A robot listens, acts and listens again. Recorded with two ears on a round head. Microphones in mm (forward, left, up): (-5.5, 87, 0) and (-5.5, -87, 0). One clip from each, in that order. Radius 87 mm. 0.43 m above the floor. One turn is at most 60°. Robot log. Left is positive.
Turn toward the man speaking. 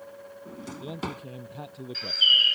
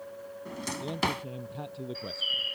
cmd yaw +30
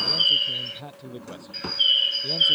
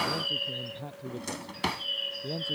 note: So it is at 140° left.
cmd yaw +60
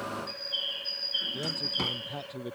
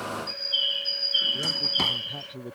note: The man speaking is now 75° left.
cmd yaw +60
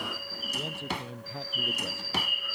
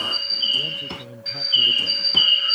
note: The man speaking is now 15° left.
cmd yaw +15
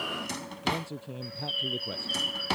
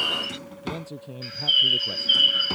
end: Facing the man speaking.